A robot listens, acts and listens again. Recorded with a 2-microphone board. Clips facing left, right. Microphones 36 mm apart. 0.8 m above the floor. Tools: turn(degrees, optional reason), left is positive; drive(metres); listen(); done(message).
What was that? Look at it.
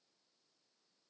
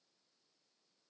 listen()
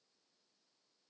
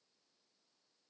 listen()
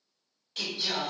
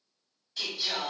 turn(degrees=65, reason="The singing: about 65° left or 115° left.")
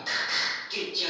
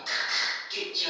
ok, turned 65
done("Facing the singing, 2 to 4 m away.")